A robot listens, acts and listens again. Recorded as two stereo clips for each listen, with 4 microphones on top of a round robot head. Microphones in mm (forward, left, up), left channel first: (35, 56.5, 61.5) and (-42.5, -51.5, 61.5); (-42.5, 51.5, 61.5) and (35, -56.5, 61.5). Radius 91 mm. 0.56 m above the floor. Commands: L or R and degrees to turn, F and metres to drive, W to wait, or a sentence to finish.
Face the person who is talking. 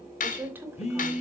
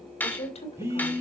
L160
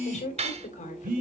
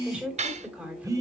L25
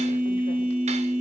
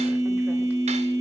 W
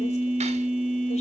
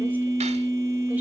W
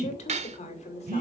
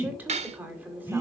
L25
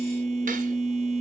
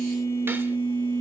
W
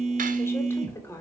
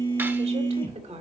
R15
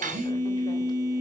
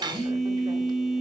W
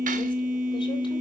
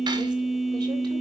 W
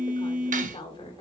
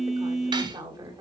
Facing the woman speaking, 2 to 4 m away.